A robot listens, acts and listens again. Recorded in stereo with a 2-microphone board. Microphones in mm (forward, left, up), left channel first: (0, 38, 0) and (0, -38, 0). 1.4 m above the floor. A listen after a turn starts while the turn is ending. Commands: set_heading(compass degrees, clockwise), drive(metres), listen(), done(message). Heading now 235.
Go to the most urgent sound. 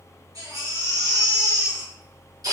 set_heading(290)
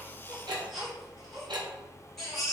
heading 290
drive(1.0)
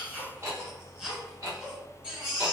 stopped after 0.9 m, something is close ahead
set_heading(300)
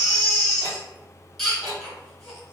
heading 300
done("I am next to the baby crying.")